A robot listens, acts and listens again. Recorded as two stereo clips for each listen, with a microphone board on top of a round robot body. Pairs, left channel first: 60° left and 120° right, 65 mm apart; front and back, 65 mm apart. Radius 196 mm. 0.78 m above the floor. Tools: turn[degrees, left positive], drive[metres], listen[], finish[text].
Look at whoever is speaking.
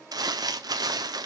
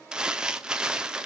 Action: listen[]
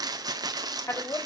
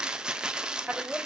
Thought: The woman speaking: 105° left.
Action: turn[105]
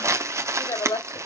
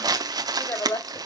Thought: The woman speaking is now 40° left.
Action: turn[40]
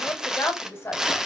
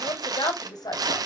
Action: finish[Found it: a woman speaking, straight ahead, 2 to 4 m away.]